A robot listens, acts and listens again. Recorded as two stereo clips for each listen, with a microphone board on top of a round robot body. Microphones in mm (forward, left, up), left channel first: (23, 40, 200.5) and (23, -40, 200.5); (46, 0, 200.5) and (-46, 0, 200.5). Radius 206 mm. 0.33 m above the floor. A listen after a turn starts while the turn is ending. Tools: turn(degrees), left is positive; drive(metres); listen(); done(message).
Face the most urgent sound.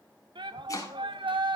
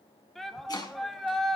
turn(degrees=-90)
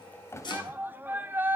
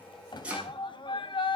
turn(degrees=-25)
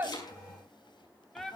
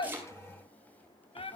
done("Facing the shout, 2 to 4 m away.")